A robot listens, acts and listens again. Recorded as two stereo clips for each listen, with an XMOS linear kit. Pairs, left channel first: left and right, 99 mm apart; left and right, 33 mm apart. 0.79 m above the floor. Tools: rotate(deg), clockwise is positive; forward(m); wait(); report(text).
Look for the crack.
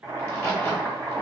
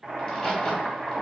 rotate(-25)
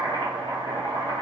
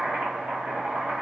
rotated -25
wait()
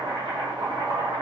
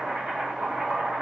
report("I heard a crack, but can't make it out now. It was about straight ahead or 130° left.")